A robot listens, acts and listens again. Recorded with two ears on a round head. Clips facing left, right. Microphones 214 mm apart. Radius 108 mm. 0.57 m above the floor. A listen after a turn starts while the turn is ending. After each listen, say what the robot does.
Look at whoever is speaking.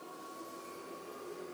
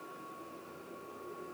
Keep listening.
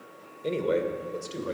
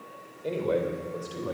Turn 35° left.
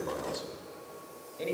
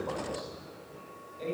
Turn 110° left.
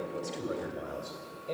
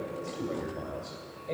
Turn 10° left.
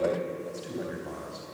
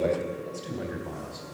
Facing the man speaking.